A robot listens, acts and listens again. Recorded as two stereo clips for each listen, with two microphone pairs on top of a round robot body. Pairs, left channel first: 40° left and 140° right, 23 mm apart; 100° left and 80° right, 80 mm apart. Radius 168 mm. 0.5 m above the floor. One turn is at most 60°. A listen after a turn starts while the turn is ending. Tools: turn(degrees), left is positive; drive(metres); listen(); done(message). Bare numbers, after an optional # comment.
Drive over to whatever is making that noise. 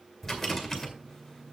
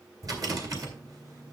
# The rattle: 35° right.
turn(-35)
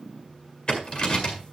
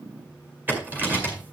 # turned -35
# The rattle is now 10° right.
turn(-10)
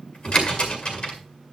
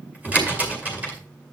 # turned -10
# The rattle is now 10° right.
turn(-10)
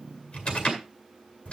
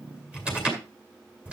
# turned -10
drive(1.0)
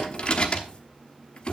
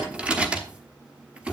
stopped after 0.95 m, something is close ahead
done("I am next to the rattle.")